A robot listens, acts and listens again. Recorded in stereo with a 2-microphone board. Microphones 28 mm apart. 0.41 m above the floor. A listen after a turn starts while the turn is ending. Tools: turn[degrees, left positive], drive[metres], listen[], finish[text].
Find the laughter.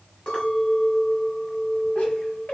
Thought: The laughter: about 70° left or 110° left.
Action: turn[70]
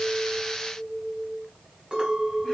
Action: listen[]
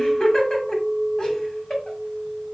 Thought: So it is at 20° left.
Action: turn[20]
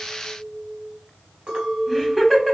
Action: finish[Facing the laughter, 2 to 4 m away.]